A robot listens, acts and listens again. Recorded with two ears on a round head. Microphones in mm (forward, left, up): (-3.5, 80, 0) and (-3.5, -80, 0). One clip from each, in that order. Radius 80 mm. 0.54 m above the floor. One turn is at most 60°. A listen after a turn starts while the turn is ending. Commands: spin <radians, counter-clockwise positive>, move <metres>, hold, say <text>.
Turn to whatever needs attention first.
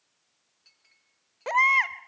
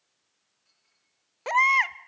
spin -0.35
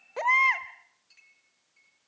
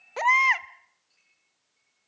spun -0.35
spin -1.05
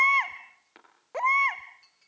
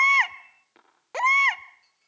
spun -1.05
spin -1.05
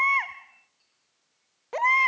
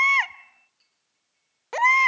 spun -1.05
spin -0.70
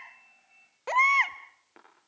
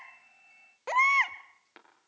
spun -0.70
say Facing the baby crying.